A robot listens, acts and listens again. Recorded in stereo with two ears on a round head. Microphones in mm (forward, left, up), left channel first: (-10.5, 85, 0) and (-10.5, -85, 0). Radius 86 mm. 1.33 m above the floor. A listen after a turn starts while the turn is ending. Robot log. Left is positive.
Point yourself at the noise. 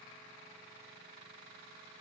cmd idle
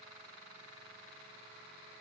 cmd idle
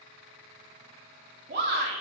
note: The shout: about 55° right or 125° right.
cmd yaw -55
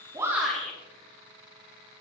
end: Facing the shout.